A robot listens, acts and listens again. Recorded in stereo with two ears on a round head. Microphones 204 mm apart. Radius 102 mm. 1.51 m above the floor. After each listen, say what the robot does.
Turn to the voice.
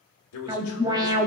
Turn 70° left.
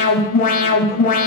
Keep listening.
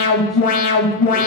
Keep listening.
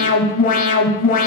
I heard a man speaking, but can't make it out now. It was about straight ahead or 40° left.